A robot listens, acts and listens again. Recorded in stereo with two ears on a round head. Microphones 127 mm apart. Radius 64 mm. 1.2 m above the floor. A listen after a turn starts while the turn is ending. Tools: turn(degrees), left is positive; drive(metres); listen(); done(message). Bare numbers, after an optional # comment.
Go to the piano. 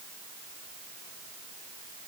listen()
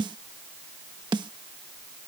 listen()
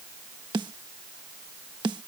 done("I can't make out a piano to turn to.")